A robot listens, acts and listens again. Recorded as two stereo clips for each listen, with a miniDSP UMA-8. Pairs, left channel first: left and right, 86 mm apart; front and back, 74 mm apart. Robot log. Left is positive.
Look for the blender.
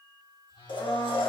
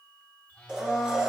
note: The blender: 105° left.
cmd yaw +105
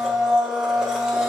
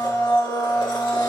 end: Found it: a blender, straight ahead, 1 to 2 m away.